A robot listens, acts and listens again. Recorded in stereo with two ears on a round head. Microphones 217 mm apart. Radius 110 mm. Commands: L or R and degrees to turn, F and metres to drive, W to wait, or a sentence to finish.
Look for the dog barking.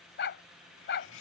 L50
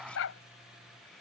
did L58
L65
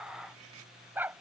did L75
R10
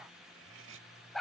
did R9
Facing the dog barking.